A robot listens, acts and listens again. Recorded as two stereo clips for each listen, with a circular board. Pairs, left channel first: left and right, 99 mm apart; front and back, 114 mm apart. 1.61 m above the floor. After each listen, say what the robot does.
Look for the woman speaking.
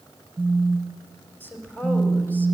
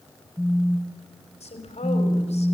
Turn 20° left.
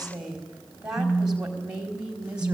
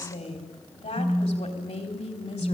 Turn 10° right.
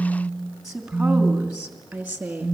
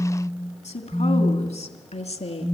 Turn 10° right.
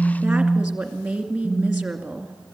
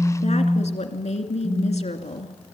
Facing the woman speaking, 2 to 4 m away.